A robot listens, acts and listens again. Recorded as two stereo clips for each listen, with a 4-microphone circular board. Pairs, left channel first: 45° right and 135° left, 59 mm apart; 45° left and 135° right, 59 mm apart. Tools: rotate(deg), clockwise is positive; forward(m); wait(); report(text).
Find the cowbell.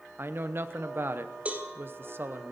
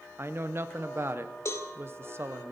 rotate(-70)
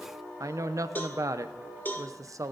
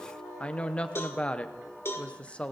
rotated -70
report("Found it: a cowbell, straight ahead, 1 to 2 m away.")